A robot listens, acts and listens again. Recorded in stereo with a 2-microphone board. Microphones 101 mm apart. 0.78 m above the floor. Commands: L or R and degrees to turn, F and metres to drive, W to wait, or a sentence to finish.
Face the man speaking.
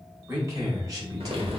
R40
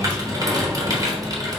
W
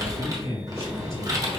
R100
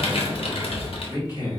L40
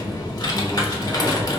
W
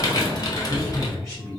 Found it: a man speaking, straight ahead.